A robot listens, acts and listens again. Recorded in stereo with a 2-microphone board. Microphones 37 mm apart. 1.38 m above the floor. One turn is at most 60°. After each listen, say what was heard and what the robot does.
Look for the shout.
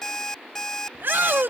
The shout: about 65° right or 115° right. Turn 60° right.
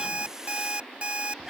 So it is at 15° right. Turn 15° right.
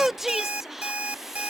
The shout is now 10° right. Turn 10° right.
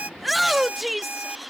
Facing the shout.